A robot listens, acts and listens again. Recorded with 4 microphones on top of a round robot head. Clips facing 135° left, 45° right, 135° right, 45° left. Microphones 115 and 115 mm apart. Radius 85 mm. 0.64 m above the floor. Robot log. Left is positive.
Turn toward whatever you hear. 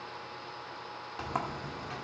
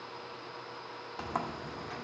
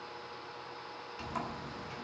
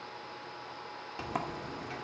note: The sliding door: 45° left.
cmd yaw +45
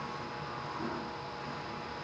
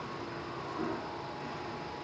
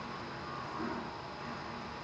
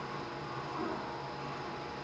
note: The sliding door is now 15° right.
cmd yaw -15
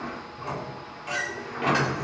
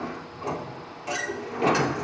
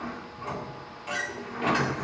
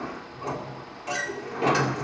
end: Found it: a sliding door, straight ahead.